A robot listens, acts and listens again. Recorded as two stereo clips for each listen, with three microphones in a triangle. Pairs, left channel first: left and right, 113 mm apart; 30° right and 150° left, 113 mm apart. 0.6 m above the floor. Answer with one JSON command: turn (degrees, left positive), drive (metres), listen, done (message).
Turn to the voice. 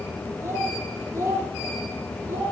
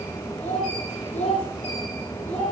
{"turn": -25}
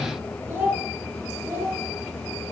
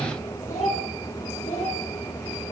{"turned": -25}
{"turn": -15}
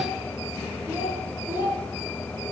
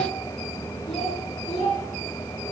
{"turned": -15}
{"turn": -15}
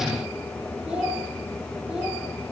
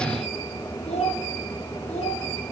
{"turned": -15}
{"done": "Found it: a child speaking, straight ahead, over 4 m away."}